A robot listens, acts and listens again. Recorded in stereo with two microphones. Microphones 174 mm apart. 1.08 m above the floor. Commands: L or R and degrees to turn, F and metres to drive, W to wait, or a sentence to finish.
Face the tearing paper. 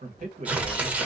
R30
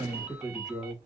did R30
W
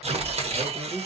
R140
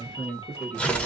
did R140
Found it: tearing paper, straight ahead, under 1 m away.